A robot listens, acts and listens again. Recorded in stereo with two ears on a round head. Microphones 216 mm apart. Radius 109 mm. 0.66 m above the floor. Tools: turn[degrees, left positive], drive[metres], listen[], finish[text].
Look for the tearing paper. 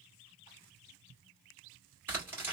Action: turn[-30]
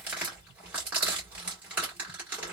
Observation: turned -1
Action: turn[-30]
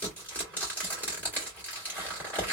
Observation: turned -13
Action: finish[Found it: tearing paper, straight ahead.]